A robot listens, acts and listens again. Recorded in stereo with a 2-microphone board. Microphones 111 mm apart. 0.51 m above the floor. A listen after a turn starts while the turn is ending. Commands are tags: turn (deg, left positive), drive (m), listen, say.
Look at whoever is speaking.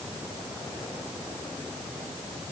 <listen/>
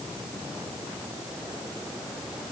<listen/>
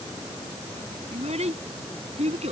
<turn deg="-90"/>
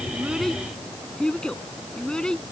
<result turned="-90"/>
<turn deg="10"/>
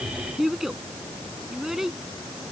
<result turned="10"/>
<say>Facing the child speaking.</say>